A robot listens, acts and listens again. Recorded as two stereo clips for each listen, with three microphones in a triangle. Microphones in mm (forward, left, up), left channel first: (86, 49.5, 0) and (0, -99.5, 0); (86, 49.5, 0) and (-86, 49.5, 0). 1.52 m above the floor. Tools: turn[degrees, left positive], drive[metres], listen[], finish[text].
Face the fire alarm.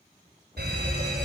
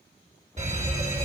Thought: The fire alarm: 135° right.
Action: turn[-135]
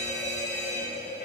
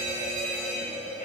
Thought: The fire alarm is now 15° left.
Action: turn[15]
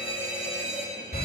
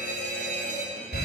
Action: finish[Facing the fire alarm.]